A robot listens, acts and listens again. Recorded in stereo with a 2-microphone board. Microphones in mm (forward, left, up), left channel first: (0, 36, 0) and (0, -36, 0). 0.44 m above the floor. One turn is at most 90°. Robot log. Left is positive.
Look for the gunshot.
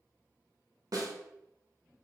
cmd idle
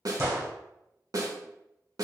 note: The gunshot: about 35° right or 145° right.
cmd yaw -35
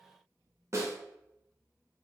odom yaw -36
cmd idle
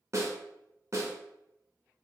end: I heard a gunshot, but can't make it out now. It was about straight ahead or 110° right.